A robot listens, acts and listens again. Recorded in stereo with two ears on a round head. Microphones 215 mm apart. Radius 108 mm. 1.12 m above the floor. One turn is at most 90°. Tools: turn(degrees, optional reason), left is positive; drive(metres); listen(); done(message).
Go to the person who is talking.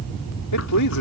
turn(degrees=90)
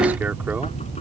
listen()
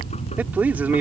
drive(metres=1.0)
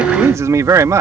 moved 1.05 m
turn(degrees=-15, reason="The man speaking is now 15° right.")
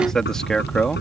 drive(metres=1.0)
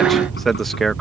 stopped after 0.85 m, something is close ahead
done("I am next to the man speaking.")